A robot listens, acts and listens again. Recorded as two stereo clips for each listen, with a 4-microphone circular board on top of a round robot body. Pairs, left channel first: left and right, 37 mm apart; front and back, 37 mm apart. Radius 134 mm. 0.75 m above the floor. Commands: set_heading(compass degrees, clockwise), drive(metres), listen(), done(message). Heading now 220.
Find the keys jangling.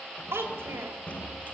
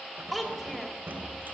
set_heading(75)
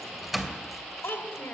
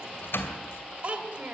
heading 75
done("Found it: keys jangling, straight ahead.")